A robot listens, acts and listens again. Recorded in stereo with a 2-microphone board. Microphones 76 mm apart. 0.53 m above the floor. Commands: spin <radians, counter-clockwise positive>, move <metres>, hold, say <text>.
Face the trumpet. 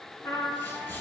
spin 1.05
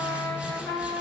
spin 1.05
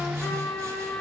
spin 0.35
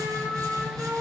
say Facing the trumpet.